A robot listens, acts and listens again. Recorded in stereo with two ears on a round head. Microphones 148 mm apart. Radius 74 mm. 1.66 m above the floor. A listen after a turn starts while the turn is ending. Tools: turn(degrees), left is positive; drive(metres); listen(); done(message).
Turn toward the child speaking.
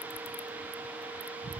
listen()
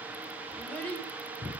turn(degrees=30)
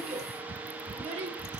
turn(degrees=-40)
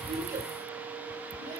listen()
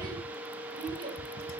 turn(degrees=-30)
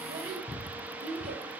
turn(degrees=-10)
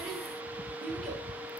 done("Facing the child speaking, over 4 m away.")